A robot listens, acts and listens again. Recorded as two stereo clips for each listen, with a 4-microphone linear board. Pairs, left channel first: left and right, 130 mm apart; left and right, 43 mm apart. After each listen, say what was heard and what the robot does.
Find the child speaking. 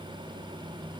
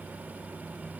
Keep listening.
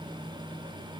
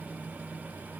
Keep listening.
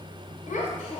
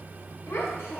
Turn 90° left.
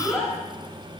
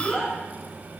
Found it: a child speaking, straight ahead.